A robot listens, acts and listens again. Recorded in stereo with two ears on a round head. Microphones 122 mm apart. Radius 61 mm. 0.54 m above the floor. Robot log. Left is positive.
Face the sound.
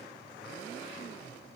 cmd idle
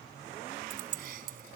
note: The keys jangling: about 75° right or 105° right.
cmd yaw -75
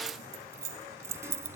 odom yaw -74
note: So it is at 20° right.
cmd yaw -20
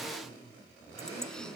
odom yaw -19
cmd idle
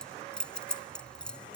end: Facing the keys jangling.